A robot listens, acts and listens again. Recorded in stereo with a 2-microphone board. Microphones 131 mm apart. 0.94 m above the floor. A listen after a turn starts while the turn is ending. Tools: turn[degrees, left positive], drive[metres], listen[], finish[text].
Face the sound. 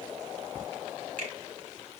Action: turn[-90]
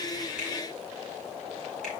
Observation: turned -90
Action: listen[]
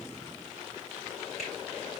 Action: listen[]
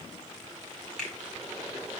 Action: finish[Facing the finger snap, over 4 m away.]